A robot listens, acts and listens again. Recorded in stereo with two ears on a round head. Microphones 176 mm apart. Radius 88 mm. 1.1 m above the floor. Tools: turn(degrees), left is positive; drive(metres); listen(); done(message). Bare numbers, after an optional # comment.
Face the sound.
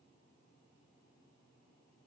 listen()
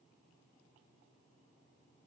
listen()
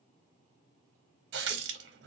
# The running tap: about 60° right or 120° right.
turn(-60)
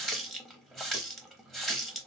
done("Facing the running tap.")